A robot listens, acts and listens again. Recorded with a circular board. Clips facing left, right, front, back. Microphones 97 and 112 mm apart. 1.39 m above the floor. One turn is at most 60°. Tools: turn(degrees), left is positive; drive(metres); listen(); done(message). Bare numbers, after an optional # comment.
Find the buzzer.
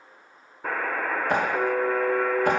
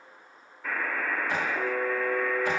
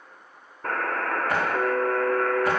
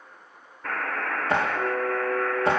# The buzzer: 45° left.
turn(45)
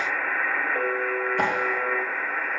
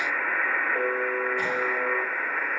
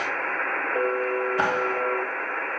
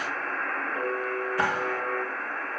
done("Found it: a buzzer, straight ahead, 2 to 4 m away.")